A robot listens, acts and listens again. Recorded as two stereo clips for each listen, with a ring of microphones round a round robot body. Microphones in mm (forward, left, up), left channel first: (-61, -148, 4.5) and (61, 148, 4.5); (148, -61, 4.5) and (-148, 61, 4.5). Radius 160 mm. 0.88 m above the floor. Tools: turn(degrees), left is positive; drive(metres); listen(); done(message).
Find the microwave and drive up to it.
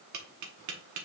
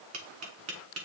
listen()
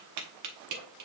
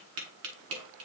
listen()
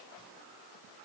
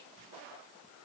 done("I can't make out a microwave to turn to.")